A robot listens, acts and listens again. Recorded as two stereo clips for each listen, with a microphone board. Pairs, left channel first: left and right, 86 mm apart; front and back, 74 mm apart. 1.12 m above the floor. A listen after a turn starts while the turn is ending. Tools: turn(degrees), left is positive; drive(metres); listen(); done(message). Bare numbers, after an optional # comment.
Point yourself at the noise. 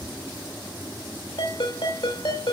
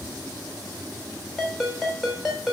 # The ringtone: 95° left.
turn(95)
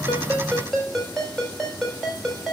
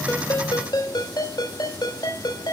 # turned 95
done("Facing the ringtone, over 4 m away.")